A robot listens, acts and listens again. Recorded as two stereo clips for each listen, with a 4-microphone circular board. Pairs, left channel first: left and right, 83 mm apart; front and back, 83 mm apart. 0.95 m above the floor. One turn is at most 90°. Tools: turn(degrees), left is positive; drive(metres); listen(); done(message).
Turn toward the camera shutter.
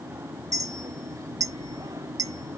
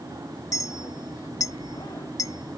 listen()
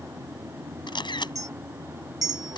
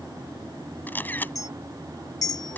turn(degrees=70)
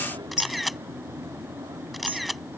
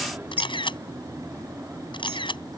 done("Found it: a camera shutter, straight ahead.")